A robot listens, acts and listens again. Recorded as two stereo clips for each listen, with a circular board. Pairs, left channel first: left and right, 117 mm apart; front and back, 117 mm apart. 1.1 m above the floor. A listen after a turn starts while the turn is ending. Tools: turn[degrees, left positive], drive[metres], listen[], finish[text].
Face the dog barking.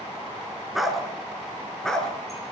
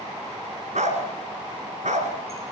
Thought: The dog barking: 175° left.
Action: turn[175]
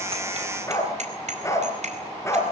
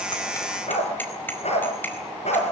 Thought: The dog barking is now 25° left.
Action: turn[25]
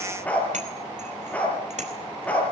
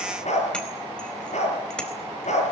Thought: The dog barking is now 10° left.
Action: turn[10]
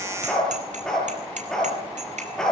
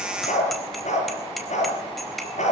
Action: finish[Facing the dog barking, over 4 m away.]